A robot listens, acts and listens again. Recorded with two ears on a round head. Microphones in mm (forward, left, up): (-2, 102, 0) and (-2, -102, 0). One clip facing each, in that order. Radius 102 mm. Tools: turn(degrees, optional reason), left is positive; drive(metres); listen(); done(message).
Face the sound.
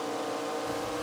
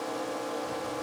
listen()
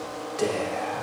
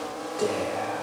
turn(degrees=25, reason="The whispering: about 25° left or 155° left.")
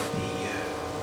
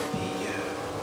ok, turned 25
done("Found it: whispering, straight ahead.")